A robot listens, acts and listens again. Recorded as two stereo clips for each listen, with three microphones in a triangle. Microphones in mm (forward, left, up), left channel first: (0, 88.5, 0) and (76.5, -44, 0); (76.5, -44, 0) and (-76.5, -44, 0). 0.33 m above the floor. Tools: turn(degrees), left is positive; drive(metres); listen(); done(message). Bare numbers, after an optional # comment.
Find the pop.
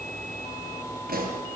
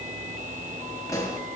# The pop: 70° right.
turn(-70)
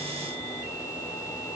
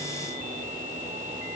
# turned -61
# Nothing new. It was at 10° right.
turn(-10)
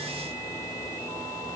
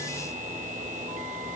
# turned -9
done("I heard a pop from this way, but can't make it out now.")